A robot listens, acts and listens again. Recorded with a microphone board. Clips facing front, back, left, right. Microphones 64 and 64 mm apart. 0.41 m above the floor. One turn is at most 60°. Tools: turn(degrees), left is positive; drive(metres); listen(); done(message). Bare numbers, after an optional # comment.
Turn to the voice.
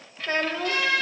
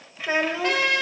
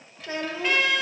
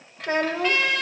# The child speaking: 105° right.
turn(-60)
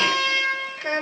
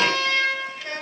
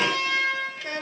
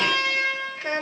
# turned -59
# The child speaking is now 45° right.
turn(-45)
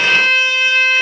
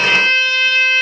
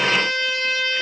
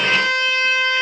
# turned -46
listen()
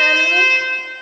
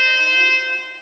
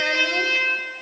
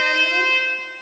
listen()
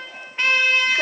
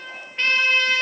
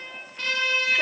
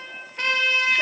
done("I heard a child speaking from this way, but can't make it out now.")